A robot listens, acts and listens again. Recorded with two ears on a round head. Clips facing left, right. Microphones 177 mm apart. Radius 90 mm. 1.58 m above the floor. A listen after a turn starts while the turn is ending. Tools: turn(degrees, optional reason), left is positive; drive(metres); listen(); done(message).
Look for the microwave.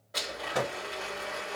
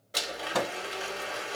turn(degrees=-70, reason="The microwave: about 70° right or 110° right.")
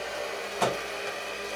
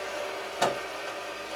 turn(degrees=-25, reason="So it is at 25° right.")
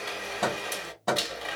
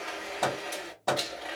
done("Facing the microwave.")